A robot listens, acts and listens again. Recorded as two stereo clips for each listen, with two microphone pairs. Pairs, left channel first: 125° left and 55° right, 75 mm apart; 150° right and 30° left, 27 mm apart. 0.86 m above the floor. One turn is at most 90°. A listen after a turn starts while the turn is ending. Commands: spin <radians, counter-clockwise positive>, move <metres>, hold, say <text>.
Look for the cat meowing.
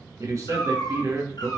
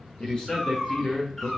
spin 1.57
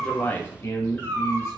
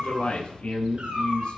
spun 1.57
spin 1.13
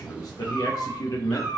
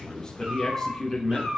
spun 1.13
spin 0.61
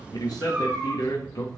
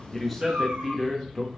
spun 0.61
spin 0.26
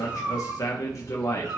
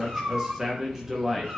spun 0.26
say Facing the cat meowing.